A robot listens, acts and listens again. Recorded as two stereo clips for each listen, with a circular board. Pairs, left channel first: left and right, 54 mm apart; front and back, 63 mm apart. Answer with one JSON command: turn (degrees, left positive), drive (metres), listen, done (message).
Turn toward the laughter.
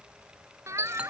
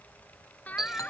{"turn": -65}
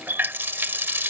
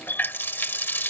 {"listen": true}
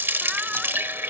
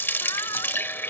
{"listen": true}
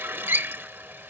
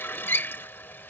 {"done": "I heard laughter from this way, but can't make it out now."}